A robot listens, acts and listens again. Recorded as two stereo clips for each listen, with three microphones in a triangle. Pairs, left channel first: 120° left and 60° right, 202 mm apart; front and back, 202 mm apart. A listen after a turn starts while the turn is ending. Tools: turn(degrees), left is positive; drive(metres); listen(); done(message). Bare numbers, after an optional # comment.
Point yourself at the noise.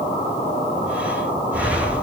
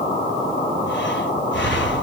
# The breathing: 20° left.
turn(20)
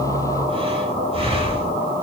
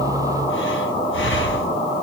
done("Facing the breathing, 2 to 4 m away.")